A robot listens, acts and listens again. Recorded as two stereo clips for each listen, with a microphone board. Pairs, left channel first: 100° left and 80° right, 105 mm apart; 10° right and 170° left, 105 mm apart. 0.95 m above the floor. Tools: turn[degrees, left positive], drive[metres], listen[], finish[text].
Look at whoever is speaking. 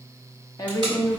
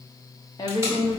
Thought: The woman speaking: 45° left.
Action: turn[45]
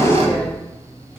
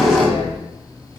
Action: listen[]
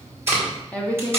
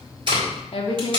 Thought: The woman speaking is now 25° left.
Action: turn[25]
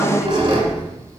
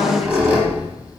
Action: listen[]
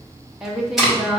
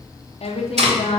Action: finish[Found it: a woman speaking, straight ahead.]